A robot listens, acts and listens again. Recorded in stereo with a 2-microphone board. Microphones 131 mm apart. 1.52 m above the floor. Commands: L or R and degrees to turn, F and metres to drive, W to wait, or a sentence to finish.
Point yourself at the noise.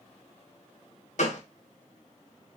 L60
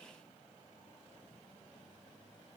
W
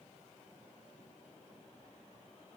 I heard a gunshot, but can't make it out now. It was about straight ahead or 60° left.